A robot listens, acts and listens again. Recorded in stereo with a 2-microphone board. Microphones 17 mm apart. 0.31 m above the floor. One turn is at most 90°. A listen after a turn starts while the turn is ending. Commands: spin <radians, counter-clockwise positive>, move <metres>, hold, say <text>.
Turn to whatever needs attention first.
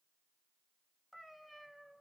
hold
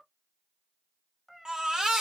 spin -1.05
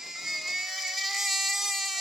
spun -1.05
spin -0.17
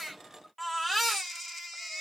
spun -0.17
say Found it: a baby crying, straight ahead.